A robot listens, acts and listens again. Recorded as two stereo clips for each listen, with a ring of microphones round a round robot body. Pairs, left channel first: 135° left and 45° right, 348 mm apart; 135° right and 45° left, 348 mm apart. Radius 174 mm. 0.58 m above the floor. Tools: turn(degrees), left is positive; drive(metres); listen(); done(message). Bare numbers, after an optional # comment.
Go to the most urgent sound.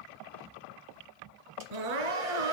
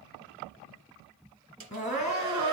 # The crying: 65° right.
turn(-65)
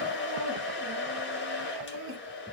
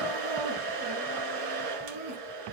# The crying is now 10° left.
turn(10)
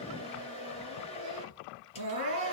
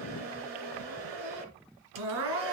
drive(1.0)
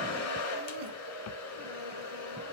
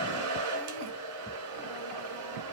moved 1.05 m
listen()
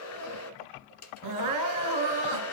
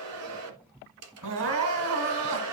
# The crying is now 10° right.
turn(-10)
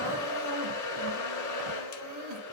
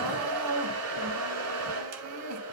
drive(1.0)
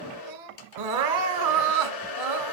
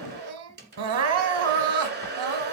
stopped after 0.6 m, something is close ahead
done("Arrived at the crying, straight ahead.")